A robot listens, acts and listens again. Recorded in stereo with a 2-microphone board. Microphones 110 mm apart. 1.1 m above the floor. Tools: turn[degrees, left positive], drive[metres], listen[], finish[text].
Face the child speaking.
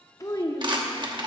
Thought: The child speaking: about 35° left or 145° left.
Action: turn[35]
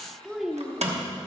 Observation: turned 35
Action: finish[Found it: a child speaking, straight ahead.]